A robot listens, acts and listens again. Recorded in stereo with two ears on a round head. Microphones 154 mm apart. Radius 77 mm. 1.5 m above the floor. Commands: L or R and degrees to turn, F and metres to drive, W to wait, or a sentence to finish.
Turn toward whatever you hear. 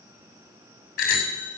L60
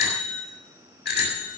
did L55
L65
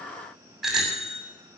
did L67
Facing the bicycle bell.